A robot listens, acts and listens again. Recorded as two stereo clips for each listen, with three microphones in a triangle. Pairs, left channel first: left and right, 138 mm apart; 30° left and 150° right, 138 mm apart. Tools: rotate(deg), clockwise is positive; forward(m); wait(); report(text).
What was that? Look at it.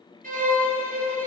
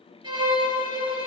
rotate(90)
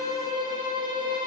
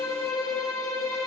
rotate(35)
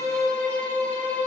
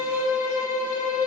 rotate(-15)
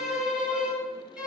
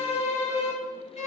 report("Found it: a violin, straight ahead.")